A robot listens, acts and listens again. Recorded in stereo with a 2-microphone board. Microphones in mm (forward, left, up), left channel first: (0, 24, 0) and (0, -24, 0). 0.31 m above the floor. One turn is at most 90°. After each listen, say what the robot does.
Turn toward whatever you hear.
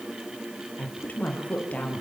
Turn 30° left.
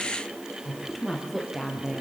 Found it: a woman speaking, straight ahead.